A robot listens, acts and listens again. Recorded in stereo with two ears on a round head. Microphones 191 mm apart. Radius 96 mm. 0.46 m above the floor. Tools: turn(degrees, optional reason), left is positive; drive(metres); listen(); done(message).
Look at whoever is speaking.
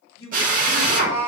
turn(degrees=60, reason="The man speaking: about 60° left or 120° left.")
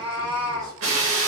listen()
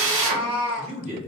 turn(degrees=-35, reason="So it is at 35° right.")
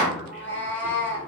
listen()
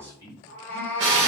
turn(degrees=-15, reason="The man speaking is now 15° right.")
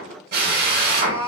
listen()
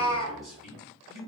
done("Found it: a man speaking, straight ahead.")